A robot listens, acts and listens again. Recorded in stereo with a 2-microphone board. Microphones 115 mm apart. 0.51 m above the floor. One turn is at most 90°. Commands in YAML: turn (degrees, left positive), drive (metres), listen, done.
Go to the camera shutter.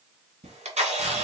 turn: -90
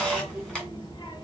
drive: 1.0
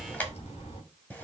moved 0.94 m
listen: true
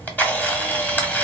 turn: 15
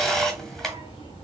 drive: 1.0
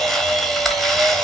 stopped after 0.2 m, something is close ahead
done: "I am next to the camera shutter."